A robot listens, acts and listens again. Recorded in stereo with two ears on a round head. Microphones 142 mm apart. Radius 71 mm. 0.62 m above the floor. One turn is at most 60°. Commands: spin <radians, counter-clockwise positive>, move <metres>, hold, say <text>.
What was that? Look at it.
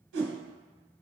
spin -1.05
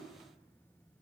spin -0.52
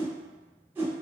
spin -0.26
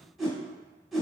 say Facing the whoosh.